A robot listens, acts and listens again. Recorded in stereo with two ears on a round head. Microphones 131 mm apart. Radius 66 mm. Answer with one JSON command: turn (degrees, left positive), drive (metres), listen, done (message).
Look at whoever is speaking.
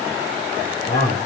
{"turn": 55}
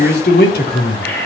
{"turn": 65}
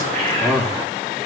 {"done": "Found it: a man speaking, straight ahead, 2 to 4 m away."}